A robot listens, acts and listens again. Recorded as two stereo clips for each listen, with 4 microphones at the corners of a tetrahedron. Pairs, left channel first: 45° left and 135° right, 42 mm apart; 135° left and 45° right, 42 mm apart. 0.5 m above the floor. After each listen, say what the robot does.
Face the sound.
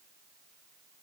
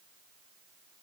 Keep listening.
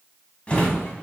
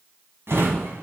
Turn 20° right.
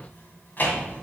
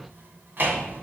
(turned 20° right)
Found it: a drawer, straight ahead.